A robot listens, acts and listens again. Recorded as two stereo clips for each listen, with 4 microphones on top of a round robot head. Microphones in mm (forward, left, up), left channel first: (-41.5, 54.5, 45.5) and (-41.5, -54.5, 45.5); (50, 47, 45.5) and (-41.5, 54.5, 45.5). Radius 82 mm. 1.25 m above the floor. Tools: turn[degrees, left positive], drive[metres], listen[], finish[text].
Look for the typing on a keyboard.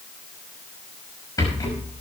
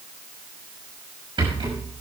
Action: listen[]
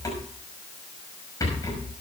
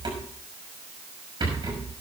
Action: listen[]
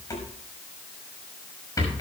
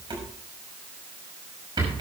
Action: finish[I can't make out typing on a keyboard to turn to.]